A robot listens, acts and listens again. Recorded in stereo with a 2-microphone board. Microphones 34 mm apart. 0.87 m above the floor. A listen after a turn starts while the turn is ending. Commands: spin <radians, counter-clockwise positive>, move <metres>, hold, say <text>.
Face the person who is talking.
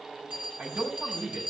spin -0.70
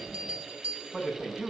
say Facing the man speaking.